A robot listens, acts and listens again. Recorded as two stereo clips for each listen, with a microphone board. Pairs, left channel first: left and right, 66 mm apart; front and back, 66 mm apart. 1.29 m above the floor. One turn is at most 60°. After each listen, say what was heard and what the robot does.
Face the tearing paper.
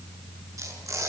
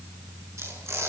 The tearing paper: 130° right. Turn 60° right.
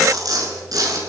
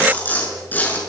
The tearing paper is now 65° right. Turn 60° right.
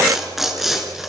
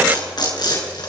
Facing the tearing paper, over 4 m away.